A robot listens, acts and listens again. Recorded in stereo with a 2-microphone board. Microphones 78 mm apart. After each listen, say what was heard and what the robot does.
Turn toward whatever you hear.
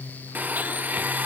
The blender: about 20° right or 160° right. Turn 20° right.
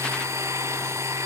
So it is at 135° right. Turn 135° right.
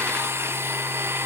The blender is now 40° right. Turn 40° right.
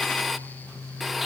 Found it: a blender, straight ahead, under 1 m away.